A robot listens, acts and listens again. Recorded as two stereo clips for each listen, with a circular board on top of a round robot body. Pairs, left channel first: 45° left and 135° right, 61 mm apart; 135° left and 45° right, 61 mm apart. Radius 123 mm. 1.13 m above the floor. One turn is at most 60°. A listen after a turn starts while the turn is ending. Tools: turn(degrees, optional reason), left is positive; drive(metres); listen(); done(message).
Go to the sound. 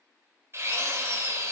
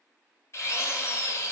turn(degrees=60, reason="The drill: 175° left.")
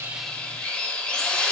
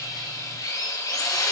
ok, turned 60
turn(degrees=60, reason="The drill is now 115° left.")
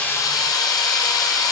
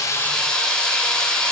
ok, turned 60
turn(degrees=55, reason="The drill is now 55° left.")
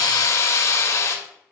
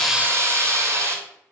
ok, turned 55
drive(metres=1.0)
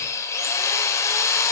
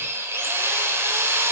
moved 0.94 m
drive(metres=1.0)
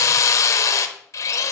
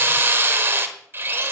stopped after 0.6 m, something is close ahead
turn(degrees=10, reason="The drill is now 10° left.")
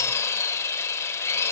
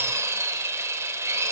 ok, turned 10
done("I am next to the drill.")